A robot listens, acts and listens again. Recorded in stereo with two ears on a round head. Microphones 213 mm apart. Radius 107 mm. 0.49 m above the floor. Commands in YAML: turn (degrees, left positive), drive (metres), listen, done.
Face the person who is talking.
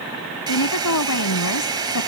turn: 90
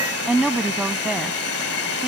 done: "Facing the woman speaking."